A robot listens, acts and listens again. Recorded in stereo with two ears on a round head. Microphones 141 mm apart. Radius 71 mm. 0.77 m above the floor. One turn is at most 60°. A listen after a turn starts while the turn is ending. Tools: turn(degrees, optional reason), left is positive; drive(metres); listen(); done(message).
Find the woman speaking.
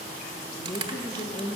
turn(degrees=25, reason="The woman speaking: about 25° left or 155° left.")
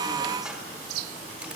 listen()
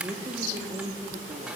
turn(degrees=-30, reason="So it is at 30° right.")
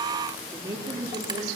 turn(degrees=-25, reason="The woman speaking is now 25° right.")
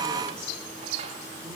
listen()
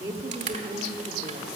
turn(degrees=-20, reason="The woman speaking is now 20° right.")
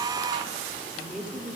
done("Found it: a woman speaking, straight ahead, 1 to 2 m away.")